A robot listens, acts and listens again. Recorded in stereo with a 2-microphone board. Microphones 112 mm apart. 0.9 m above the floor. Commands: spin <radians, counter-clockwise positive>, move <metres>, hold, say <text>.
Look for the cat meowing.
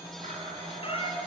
spin 0.96
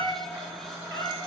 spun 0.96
spin 0.35
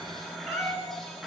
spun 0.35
say Facing the cat meowing.